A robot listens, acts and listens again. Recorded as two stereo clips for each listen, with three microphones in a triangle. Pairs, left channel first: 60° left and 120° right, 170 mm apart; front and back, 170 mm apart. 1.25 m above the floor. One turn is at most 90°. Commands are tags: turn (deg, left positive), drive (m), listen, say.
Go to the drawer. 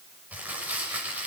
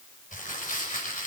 <listen/>
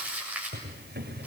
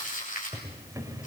<turn deg="-90"/>
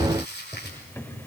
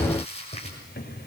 <turn deg="-15"/>
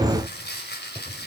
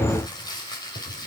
<listen/>
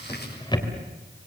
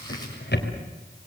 <drive m="1.0"/>
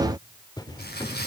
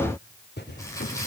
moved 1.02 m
<drive m="1.0"/>
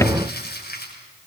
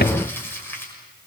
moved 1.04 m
<listen/>
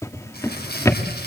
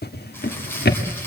<turn deg="-15"/>
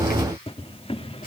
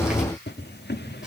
<drive m="1.0"/>
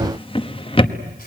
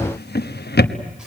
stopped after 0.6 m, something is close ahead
<say>Arrived at the drawer, straight ahead.</say>